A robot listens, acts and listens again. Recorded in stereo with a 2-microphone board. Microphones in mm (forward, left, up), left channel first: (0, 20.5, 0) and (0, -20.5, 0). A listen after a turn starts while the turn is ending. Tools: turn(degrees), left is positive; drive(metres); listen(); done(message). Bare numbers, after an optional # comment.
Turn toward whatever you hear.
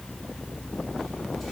listen()
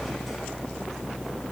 listen()
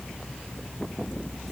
done("I can't make out anything.")